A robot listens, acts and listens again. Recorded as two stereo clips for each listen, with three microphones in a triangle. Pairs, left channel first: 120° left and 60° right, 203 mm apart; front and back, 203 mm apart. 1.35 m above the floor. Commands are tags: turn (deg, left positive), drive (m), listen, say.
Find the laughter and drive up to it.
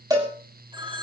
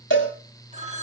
<listen/>
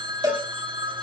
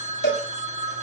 <listen/>
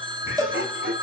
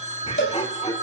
<turn deg="-60"/>
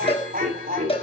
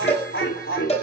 <turn deg="-15"/>
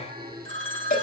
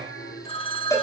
<drive m="1.0"/>
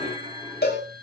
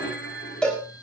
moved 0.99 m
<drive m="1.0"/>
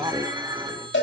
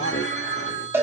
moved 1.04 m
<turn deg="15"/>
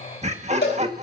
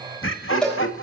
<drive m="1.0"/>
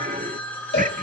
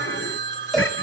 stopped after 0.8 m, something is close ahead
<turn deg="-10"/>
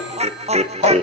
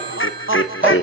<say>I am next to the laughter.</say>